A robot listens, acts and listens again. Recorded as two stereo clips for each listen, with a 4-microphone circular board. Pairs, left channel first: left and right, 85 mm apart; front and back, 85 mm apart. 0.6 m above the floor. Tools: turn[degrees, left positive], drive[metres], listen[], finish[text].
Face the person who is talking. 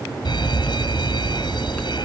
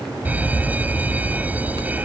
Action: listen[]
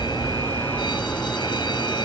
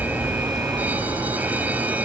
Action: listen[]
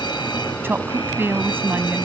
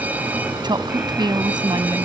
Thought: The woman speaking: 155° right.
Action: turn[-155]
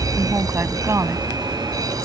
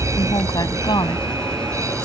Thought: The woman speaking is now 35° right.
Action: turn[-35]
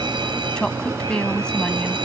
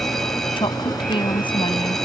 Thought: The woman speaking is now 10° left.
Action: turn[10]
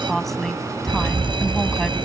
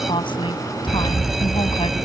Action: finish[Found it: a woman speaking, straight ahead.]